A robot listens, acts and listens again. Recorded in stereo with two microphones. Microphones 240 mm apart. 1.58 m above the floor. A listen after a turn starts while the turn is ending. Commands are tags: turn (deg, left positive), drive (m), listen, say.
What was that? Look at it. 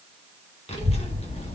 <turn deg="25"/>
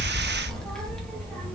<say>Found it: a child speaking, straight ahead, under 1 m away.</say>